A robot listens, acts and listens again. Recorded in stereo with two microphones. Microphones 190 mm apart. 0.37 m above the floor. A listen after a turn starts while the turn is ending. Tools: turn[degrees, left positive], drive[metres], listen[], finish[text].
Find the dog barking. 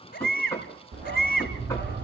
Action: turn[-90]
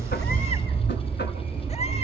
Thought: So it is at 10° right.
Action: turn[-10]
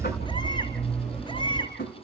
Action: finish[Found it: a dog barking, straight ahead.]